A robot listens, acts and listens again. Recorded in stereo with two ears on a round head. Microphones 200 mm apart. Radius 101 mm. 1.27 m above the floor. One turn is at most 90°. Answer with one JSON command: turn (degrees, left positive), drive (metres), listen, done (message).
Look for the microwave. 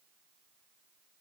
{"listen": true}
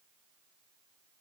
{"listen": true}
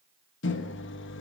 {"turn": 60}
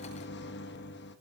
{"turn": 55}
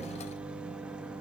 {"done": "Facing the microwave, 1 to 2 m away."}